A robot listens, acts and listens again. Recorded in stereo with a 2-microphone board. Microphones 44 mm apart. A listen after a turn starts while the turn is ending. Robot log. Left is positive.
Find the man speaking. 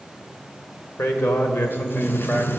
note: The man speaking: about 45° left or 135° left.
cmd yaw +45
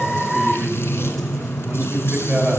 note: So it is at 20° right.
cmd yaw -20
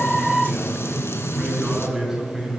end: Facing the man speaking, over 4 m away.